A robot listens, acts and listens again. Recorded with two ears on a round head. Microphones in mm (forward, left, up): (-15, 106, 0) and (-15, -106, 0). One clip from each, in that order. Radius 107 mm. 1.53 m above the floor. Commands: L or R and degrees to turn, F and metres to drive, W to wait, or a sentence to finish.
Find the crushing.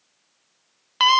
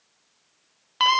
W
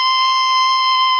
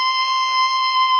W
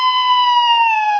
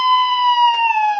I can't make out crushing, only a scream.